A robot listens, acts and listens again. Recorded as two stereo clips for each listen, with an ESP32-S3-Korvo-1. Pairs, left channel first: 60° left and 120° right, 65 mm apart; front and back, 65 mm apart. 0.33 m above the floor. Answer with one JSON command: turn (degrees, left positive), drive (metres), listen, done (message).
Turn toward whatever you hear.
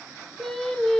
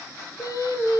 {"turn": -20}
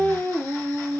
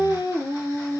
{"turn": 10}
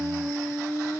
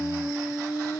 {"turn": 15}
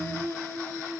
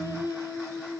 {"turn": 15}
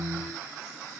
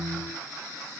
{"listen": true}
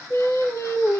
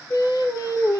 {"turn": 20}
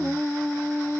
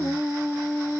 {"done": "Found it: singing, straight ahead."}